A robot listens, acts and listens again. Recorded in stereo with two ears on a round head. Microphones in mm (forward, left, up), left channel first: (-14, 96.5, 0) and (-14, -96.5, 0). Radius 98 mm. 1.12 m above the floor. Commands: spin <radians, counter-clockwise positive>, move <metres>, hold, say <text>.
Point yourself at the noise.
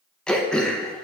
spin 0.52
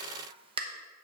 spin -0.52
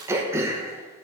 spin -0.26
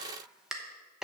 say Facing the throat clearing.